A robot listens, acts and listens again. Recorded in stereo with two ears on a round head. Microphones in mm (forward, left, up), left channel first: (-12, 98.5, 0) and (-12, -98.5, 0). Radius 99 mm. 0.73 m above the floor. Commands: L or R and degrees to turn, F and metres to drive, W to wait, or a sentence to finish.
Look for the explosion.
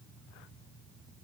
W
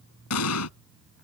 L75
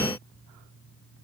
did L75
W
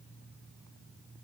I heard an explosion, but can't make it out now. It was about straight ahead or 30° left.